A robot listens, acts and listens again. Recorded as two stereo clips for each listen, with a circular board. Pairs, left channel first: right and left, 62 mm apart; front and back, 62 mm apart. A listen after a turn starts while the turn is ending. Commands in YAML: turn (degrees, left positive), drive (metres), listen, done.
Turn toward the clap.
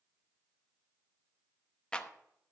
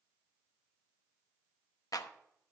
turn: -15
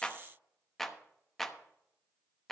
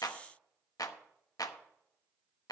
done: "Found it: a clap, straight ahead, under 1 m away."